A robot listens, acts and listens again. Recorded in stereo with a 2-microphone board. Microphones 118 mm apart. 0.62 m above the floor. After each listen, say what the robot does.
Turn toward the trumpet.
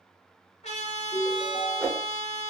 Turn 90° left.
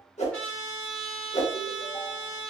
Found it: a trumpet, straight ahead, 1 to 2 m away.